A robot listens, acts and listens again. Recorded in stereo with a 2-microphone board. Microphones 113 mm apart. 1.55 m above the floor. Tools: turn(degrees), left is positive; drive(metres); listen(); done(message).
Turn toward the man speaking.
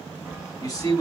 turn(degrees=35)
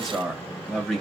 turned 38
done("Facing the man speaking.")